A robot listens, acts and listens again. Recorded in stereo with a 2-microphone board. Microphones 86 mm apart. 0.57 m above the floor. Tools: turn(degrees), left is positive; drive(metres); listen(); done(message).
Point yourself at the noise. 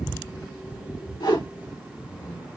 turn(degrees=60)
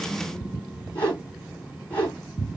turn(degrees=25)
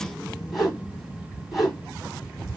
done("Facing the whoosh.")